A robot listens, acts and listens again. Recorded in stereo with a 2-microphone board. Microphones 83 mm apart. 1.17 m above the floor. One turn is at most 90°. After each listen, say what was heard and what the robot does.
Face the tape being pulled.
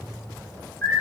Keep listening.
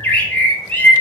Keep listening.
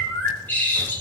I can't make out tape being pulled, only a bird.